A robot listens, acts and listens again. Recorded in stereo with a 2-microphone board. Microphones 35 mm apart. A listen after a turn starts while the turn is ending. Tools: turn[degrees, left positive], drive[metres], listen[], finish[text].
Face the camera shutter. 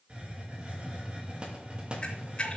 Thought: The camera shutter: about 30° left or 150° left.
Action: turn[30]
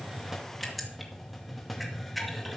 Action: finish[Facing the camera shutter.]